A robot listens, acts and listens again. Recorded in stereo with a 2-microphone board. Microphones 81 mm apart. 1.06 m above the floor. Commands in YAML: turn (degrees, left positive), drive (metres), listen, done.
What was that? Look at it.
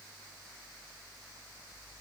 listen: true
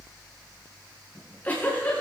turn: 20
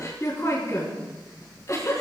turn: 135
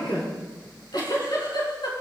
turn: 65
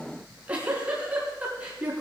turn: -20
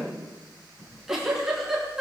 done: "Facing the giggle."